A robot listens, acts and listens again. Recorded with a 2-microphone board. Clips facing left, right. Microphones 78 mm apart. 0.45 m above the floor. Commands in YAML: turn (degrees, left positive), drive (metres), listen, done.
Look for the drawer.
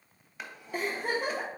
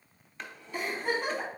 turn: 30
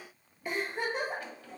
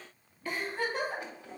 turn: -25
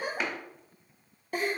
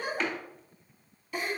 turn: 10
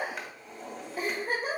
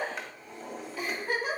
done: "Found it: a drawer, straight ahead, under 1 m away."